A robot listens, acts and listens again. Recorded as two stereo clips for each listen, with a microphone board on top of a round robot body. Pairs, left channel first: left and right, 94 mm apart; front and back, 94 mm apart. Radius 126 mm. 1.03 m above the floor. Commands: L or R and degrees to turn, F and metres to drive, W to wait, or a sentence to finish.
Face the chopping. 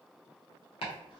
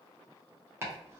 L115
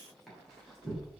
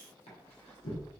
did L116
Facing the chopping.